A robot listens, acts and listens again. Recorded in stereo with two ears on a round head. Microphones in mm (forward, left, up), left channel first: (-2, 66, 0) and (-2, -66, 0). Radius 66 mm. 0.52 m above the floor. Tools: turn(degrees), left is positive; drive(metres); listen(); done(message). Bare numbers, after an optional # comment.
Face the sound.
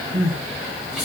turn(-30)
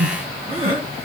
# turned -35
# So it is at 140° right.
turn(-140)
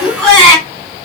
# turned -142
done("Found it: crying, straight ahead.")